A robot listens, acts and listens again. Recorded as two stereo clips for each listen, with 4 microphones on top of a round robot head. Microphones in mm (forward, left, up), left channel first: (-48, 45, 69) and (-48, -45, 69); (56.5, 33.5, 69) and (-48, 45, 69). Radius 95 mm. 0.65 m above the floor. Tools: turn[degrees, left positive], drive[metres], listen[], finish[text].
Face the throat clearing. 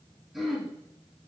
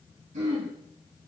Thought: The throat clearing: straight behind.
Action: turn[180]
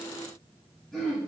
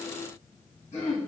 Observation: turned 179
Action: finish[Facing the throat clearing, 2 to 4 m away.]